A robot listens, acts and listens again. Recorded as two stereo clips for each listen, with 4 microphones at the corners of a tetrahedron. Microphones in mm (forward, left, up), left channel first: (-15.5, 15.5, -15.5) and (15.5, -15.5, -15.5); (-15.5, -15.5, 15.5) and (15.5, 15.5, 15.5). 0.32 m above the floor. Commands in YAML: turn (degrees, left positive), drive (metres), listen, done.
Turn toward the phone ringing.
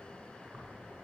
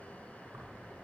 listen: true
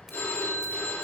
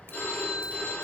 turn: 175
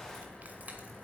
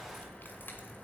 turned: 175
listen: true
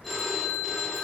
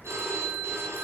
turn: 45
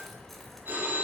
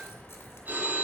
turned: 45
done: "Found it: a phone ringing, straight ahead."